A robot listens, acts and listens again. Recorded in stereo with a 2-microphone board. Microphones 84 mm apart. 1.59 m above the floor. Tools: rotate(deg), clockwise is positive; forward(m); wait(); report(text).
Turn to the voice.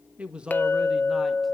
rotate(30)
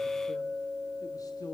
rotate(-50)
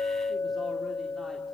wait()
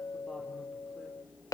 wait()
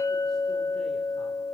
report("I heard a man speaking from this way, but can't make it out now.")